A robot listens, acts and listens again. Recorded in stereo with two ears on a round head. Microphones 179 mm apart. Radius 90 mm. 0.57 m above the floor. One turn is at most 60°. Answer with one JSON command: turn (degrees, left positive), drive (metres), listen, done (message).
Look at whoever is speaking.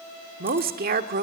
{"turn": -50}
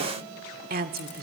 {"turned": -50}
{"turn": -60}
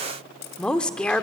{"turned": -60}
{"done": "Facing the woman speaking, 1 to 2 m away."}